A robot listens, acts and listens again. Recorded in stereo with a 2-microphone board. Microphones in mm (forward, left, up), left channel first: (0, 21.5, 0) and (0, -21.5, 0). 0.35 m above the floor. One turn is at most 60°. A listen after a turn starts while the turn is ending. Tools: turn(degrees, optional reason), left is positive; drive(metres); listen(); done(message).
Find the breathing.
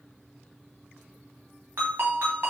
listen()
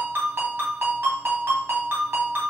listen()
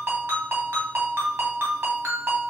done("I can't make out breathing, only a ringtone.")